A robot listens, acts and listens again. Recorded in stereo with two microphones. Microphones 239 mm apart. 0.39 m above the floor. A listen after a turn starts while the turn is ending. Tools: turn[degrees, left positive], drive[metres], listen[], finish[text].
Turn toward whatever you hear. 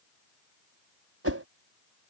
Thought: The whoosh: about 70° right or 110° right.
Action: turn[-70]
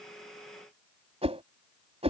Thought: So it is at 25° right.
Action: turn[-25]
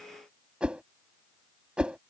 Action: finish[Found it: a whoosh, straight ahead.]